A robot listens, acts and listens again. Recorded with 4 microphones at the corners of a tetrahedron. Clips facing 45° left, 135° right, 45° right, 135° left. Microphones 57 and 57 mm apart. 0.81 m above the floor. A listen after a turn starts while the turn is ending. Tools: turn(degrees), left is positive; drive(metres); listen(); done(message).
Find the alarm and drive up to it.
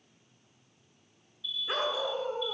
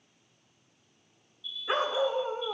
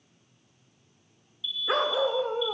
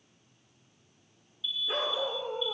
turn(degrees=60)
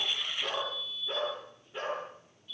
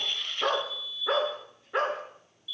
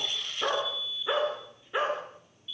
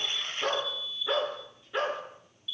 turn(degrees=10)
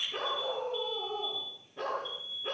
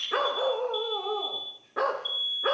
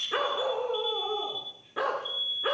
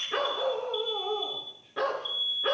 drive(metres=1.0)
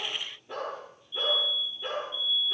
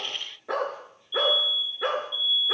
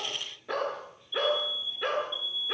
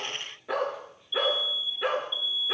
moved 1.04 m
drive(metres=1.0)
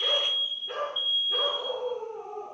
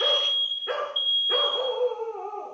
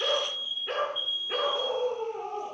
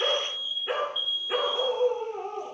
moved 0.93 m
drive(metres=1.0)
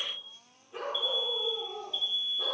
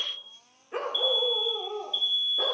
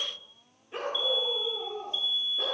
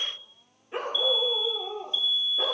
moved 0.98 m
drive(metres=1.0)
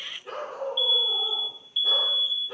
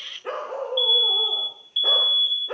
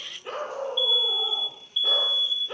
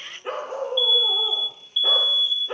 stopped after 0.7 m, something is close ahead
turn(degrees=-10)
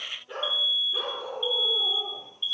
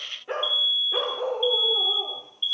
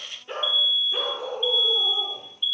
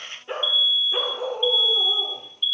done("I am next to the alarm.")